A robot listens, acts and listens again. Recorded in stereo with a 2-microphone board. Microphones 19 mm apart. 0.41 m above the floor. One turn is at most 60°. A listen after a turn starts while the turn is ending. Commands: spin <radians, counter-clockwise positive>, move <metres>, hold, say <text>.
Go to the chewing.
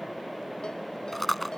spin 0.52
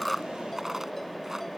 hold
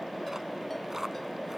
hold
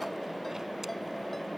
say I heard chewing, but can't make it out now. It was about 25° right or 145° left. I did not reach it.